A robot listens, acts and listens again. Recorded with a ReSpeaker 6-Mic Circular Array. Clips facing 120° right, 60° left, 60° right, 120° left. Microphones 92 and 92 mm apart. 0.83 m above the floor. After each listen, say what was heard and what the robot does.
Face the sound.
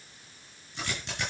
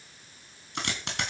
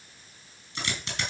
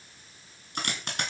The dropped coin: 80° left. Turn 80° left.
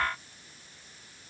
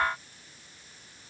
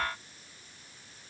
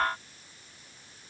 I heard a dropped coin from this way, but can't make it out now.